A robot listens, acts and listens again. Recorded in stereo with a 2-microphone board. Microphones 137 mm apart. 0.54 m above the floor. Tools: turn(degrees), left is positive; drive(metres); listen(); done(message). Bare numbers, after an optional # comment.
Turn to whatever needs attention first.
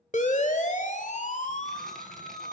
# The siren: about 65° left or 115° left.
turn(65)
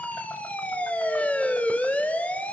# So it is at 10° left.
turn(10)
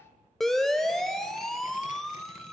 done("Found it: a siren, straight ahead.")